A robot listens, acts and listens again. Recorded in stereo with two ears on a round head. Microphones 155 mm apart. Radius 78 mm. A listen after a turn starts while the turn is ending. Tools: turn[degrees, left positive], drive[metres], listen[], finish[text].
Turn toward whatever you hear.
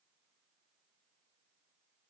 Action: listen[]
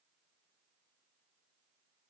Action: listen[]
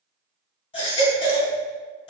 Thought: The baby crying: about 30° left or 150° left.
Action: turn[30]
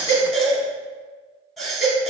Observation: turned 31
Action: finish[Found it: a baby crying, straight ahead, under 1 m away.]